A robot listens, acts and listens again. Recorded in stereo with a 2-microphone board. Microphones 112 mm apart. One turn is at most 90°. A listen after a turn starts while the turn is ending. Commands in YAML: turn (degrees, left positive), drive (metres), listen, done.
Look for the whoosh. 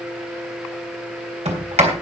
listen: true
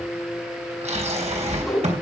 turn: 30
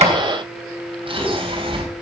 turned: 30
listen: true
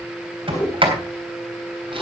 turn: 90
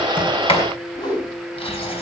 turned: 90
turn: 40
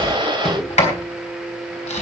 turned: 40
done: "Facing the whoosh, over 4 m away."